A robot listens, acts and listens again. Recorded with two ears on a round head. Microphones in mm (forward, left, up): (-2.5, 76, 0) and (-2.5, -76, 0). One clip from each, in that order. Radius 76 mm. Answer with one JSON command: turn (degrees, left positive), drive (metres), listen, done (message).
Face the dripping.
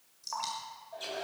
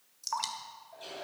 {"turn": -35}
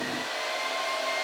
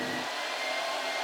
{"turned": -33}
{"listen": true}
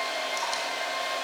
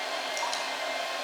{"listen": true}
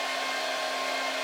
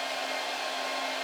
{"done": "I heard dripping, but can't make it out now. It was about 5° right or 110° right."}